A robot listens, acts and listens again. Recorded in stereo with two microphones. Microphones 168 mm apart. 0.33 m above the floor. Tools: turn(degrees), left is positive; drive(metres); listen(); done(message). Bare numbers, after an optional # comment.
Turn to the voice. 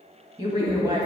# The woman speaking: about 25° right or 155° right.
turn(-25)
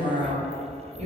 # So it is at 125° right.
turn(-125)
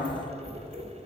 listen()
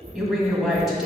done("Found it: a woman speaking, straight ahead, 2 to 4 m away.")